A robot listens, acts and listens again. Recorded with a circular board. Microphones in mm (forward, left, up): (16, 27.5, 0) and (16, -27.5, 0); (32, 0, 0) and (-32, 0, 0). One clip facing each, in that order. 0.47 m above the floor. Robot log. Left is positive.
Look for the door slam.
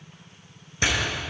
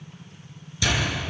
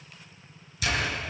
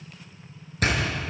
note: The door slam: 140° left.
cmd yaw +140
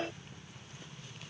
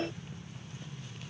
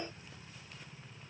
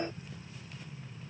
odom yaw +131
note: Nothing new. It was at 10° left.
cmd yaw +10
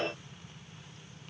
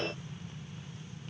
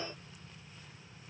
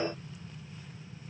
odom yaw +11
end: Facing where the door slam came from. I can't hear it now.